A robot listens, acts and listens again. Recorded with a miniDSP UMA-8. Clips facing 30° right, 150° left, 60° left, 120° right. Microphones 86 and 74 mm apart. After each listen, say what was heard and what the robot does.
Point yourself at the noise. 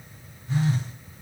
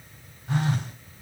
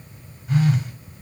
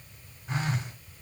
The phone buzzing: 175° left. Turn 175° left.
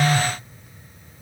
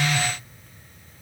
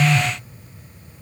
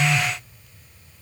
The phone buzzing is now 30° left. Turn 30° left.
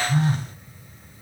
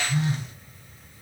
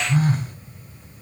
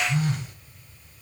The phone buzzing is now 15° left. Turn 15° left.
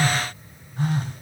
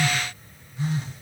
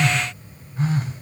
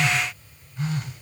Found it: a phone buzzing, straight ahead, 1 to 2 m away.